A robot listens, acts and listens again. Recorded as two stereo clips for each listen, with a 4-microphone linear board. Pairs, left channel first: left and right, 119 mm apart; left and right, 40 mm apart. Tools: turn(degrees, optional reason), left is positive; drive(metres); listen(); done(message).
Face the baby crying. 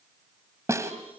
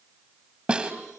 listen()
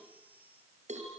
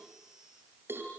listen()
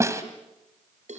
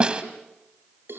done("I can't make out a baby crying, only a snare drum and a cowbell.")